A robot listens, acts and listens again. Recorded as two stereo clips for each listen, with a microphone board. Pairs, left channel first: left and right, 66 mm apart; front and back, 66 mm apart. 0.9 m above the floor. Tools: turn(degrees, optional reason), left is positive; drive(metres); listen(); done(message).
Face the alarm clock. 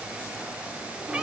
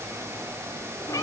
listen()
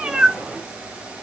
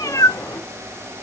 listen()
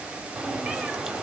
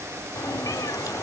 done("I can't make out an alarm clock, only a cat meowing.")